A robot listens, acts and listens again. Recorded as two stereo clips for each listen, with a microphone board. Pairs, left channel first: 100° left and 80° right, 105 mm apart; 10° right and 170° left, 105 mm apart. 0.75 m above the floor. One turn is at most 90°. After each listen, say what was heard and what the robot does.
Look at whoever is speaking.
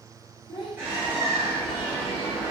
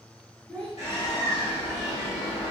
The child speaking: 60° left. Turn 60° left.
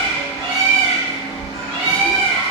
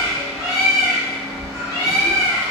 Keep listening.
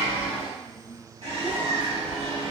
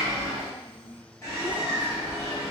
Found it: a child speaking, straight ahead, 1 to 2 m away.